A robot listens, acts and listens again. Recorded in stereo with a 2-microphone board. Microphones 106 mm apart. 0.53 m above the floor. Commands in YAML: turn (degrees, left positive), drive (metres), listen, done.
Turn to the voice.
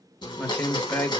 turn: 30
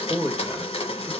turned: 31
turn: -15
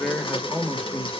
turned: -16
done: "Found it: a man speaking, straight ahead, 1 to 2 m away."